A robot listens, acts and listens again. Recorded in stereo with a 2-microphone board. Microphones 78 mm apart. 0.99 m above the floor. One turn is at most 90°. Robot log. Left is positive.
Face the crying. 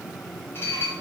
cmd idle
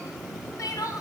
note: The crying: about 50° left or 130° left.
cmd yaw +50
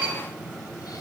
cmd idle
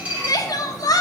note: So it is at 70° left.
cmd yaw +70
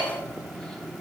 cmd idle
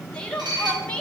note: The crying is now 15° left.
cmd yaw +15
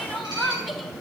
end: Found it: crying, straight ahead, 1 to 2 m away.